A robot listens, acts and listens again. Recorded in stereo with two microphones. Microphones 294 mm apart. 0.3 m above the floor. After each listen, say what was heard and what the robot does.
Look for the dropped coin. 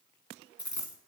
Turn 90° left.
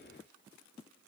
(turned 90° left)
I heard a dropped coin from this way, but can't make it out now.